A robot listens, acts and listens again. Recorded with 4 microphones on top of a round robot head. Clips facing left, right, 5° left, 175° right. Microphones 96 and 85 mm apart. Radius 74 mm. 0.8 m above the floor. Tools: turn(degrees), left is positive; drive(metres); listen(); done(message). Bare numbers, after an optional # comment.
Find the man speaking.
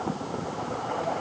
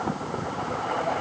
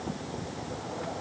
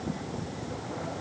listen()
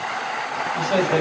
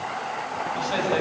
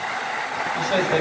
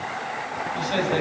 # The man speaking: 50° left.
turn(50)
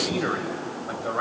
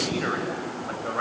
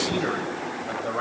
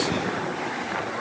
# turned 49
# The man speaking is now 15° left.
turn(15)
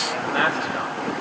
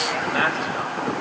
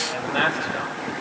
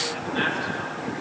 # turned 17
done("Found it: a man speaking, straight ahead.")